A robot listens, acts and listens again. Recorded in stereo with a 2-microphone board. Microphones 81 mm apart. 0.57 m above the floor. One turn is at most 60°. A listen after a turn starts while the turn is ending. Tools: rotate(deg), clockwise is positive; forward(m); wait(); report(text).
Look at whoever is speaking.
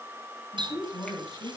rotate(-40)
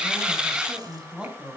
rotate(15)
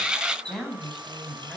report("Found it: a woman speaking, straight ahead, over 4 m away.")